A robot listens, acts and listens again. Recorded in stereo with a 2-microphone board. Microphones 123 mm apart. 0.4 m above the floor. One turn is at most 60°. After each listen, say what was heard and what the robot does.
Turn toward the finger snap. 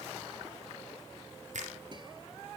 Turn 60° right.
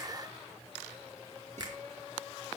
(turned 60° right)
So it is at 35° right. Turn 35° right.
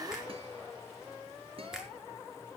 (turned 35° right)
Found it: a finger snap, straight ahead, over 4 m away.